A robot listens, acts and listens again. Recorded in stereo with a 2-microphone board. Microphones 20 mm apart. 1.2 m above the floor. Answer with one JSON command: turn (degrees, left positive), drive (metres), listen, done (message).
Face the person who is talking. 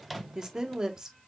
{"turn": -30}
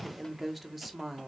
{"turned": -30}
{"done": "Found it: a woman speaking, straight ahead."}